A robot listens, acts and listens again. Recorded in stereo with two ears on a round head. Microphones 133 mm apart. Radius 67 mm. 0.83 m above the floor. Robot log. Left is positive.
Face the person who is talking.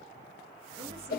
cmd idle
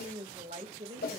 note: The woman speaking: about 45° right or 135° right.
cmd yaw -45
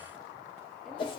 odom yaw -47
cmd idle
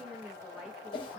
end: Facing the woman speaking.